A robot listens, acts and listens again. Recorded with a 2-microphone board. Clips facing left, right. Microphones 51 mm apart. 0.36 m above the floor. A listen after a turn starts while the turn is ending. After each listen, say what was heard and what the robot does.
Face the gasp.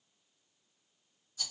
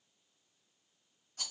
Keep listening.
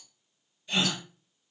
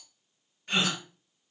The gasp: about 65° right or 115° right. Turn 65° right.
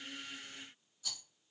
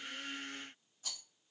Keep listening.
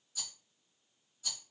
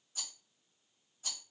I heard a gasp, but can't make it out now. It was about straight ahead or 50° right.